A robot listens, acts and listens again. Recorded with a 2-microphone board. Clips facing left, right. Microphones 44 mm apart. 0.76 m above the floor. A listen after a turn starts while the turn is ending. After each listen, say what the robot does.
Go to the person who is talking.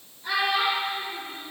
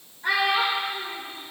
Turn 55° right.
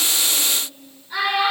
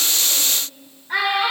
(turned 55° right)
Turn 65° right.
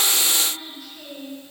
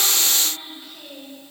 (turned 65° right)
Turn 25° right.
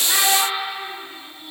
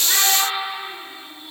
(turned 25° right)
Drive 1.0 m forward.
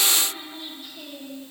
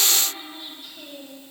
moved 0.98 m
Keep listening.
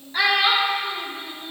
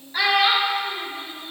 Drive 1.0 m forward.
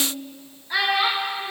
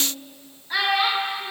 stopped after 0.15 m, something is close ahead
I am next to the child speaking.